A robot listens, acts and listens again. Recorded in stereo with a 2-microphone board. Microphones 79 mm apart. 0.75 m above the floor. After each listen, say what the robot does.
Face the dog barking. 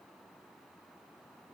Keep listening.
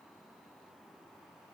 Keep listening.
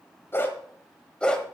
Turn 30° left.
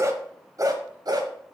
Turn 55° right.
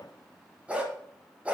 Turn 15° right.
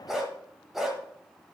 Found it: a dog barking, straight ahead, 1 to 2 m away.